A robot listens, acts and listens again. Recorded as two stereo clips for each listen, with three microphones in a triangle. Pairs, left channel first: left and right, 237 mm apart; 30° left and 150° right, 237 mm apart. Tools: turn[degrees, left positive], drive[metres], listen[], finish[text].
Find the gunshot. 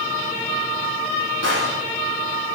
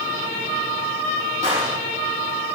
Thought: The gunshot: 90° right.
Action: turn[-90]
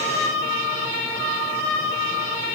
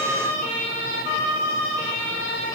Action: finish[Facing where the gunshot came from. I can't hear it now.]